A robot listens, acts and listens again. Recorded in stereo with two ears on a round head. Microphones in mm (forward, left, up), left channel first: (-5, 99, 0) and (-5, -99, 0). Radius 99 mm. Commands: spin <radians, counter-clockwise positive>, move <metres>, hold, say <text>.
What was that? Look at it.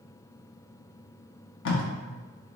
spin 1.05
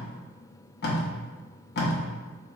spin 0.87
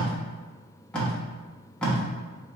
say Facing the tape being pulled.